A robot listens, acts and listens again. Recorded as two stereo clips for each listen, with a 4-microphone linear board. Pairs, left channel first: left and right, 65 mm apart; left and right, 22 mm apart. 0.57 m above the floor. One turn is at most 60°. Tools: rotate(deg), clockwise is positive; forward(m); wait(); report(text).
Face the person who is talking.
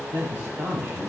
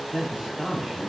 rotate(45)
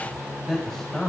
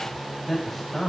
report("Facing the man speaking.")